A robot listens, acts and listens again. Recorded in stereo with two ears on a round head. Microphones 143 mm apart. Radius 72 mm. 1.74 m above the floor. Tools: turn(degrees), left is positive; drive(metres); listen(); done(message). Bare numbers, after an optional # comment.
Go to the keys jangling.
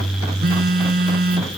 listen()
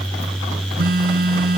listen()
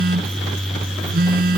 done("I can't make out keys jangling, only a phone buzzing.")